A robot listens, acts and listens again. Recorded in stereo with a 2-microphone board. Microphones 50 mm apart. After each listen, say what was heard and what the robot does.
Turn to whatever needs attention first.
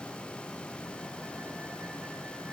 Keep listening.
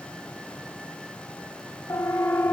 The siren: about 70° left or 110° left. Turn 70° left.
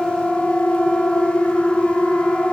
So it is at 15° left. Turn 15° left.
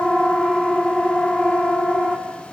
Facing the siren, 2 to 4 m away.